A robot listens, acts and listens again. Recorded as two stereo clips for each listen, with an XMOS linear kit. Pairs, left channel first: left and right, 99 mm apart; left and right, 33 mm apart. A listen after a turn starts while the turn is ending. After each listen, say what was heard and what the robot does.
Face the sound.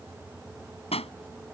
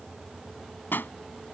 Turn 90° left.
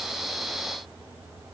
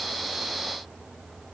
I heard a pop from this way, but can't make it out now.